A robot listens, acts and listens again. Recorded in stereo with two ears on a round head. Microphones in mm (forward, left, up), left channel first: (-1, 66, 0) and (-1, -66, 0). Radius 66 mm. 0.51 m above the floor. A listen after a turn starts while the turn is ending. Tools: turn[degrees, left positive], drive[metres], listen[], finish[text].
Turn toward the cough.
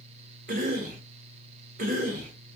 Thought: The cough: about 55° right or 125° right.
Action: turn[-55]
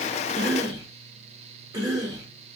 Thought: So it is at 30° right.
Action: turn[-30]
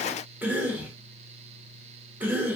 Thought: The cough is now 15° right.
Action: turn[-15]
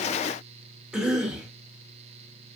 Action: finish[Facing the cough.]